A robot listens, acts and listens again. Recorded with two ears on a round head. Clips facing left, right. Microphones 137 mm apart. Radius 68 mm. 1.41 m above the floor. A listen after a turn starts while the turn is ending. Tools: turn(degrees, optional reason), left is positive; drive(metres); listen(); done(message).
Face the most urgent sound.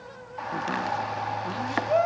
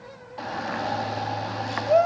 turn(degrees=-45, reason="The shout: about 45° right or 135° right.")
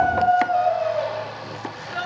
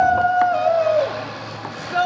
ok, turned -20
turn(degrees=-115, reason="So it is at 115° right.")
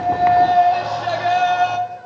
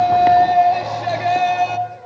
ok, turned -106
turn(degrees=-10, reason="The shout is now 10° right.")
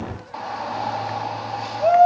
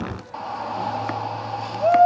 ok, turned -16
done("Facing the shout.")